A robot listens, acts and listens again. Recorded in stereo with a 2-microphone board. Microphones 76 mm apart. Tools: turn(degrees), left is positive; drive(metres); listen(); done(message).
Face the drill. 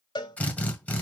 turn(degrees=20)
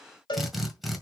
done("Found it: a drill, straight ahead.")